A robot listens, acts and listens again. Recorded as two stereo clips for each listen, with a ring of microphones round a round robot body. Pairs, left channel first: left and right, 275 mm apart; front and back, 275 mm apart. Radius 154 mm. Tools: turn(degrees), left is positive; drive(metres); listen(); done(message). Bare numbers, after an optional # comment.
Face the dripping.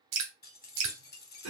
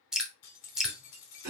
# The dripping: 90° right.
turn(-90)
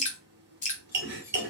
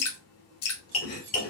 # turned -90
# The dripping is now 30° left.
turn(30)
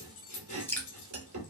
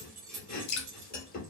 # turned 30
done("Facing the dripping.")